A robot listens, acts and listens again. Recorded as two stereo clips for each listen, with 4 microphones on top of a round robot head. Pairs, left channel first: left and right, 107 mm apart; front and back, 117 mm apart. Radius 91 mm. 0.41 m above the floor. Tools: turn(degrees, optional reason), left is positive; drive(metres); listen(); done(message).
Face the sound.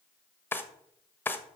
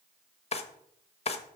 turn(degrees=20, reason="The drawer: 20° left.")
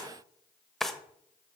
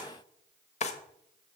done("Facing the drawer, 1 to 2 m away.")